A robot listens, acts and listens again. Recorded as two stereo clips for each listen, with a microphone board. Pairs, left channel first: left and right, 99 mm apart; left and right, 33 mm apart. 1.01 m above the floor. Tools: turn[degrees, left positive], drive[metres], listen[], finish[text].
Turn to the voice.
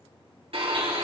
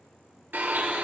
Action: listen[]
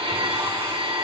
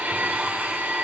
Action: listen[]
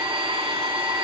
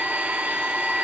Action: finish[I can't make out anyone speaking to turn to.]